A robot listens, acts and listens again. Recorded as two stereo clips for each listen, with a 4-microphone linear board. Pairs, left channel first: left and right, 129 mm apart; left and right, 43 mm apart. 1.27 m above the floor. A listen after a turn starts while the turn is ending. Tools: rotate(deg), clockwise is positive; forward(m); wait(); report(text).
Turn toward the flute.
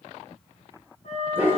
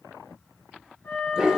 rotate(-65)
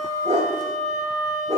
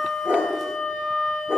rotate(-40)
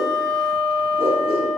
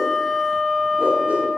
report("Facing the flute, 2 to 4 m away.")